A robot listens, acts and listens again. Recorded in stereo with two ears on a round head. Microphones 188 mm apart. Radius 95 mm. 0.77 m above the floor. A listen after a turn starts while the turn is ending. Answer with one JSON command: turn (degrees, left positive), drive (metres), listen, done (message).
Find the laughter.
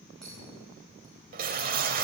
{"listen": true}
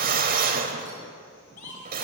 {"turn": 40}
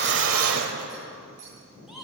{"done": "Facing the laughter, over 4 m away."}